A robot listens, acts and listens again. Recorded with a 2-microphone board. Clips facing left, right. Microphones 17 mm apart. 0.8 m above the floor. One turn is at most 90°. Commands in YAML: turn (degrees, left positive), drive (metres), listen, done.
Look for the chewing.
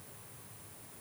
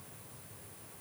listen: true
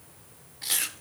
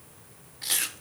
turn: 30
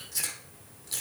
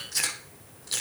turn: -35
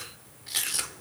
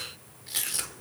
turn: 15
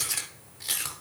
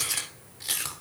done: "Found it: chewing, straight ahead, under 1 m away."